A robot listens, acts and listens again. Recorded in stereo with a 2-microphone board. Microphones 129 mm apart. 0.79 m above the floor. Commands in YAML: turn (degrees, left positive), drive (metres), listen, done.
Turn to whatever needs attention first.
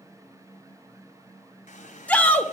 turn: 30
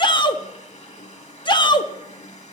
turn: 140
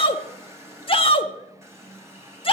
turn: 55
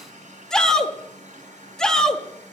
done: "Found it: a shout, straight ahead, 1 to 2 m away."